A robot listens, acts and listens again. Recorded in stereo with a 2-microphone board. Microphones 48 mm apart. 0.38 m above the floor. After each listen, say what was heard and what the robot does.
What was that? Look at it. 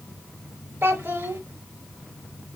The child speaking: about 60° right or 120° right. Turn 60° right.
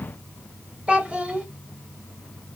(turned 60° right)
So it is at 25° right. Turn 25° right.
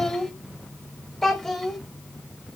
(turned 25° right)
Facing the child speaking, under 1 m away.